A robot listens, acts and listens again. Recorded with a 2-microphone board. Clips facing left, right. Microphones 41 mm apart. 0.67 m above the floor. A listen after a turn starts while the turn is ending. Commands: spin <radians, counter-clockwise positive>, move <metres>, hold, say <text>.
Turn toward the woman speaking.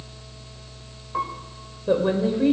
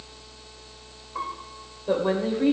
spin 0.52
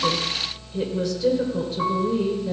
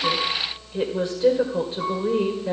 spin -0.61
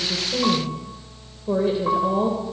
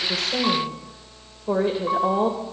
spin -0.26
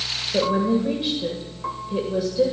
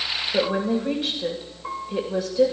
say Found it: a woman speaking, straight ahead, 2 to 4 m away.